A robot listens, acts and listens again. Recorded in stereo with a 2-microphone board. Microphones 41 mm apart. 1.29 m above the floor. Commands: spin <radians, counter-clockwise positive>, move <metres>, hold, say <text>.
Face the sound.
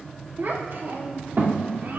spin -1.05
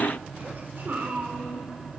spin -1.05
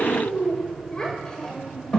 spin 0.35
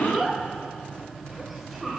say Found it: a child speaking, straight ahead.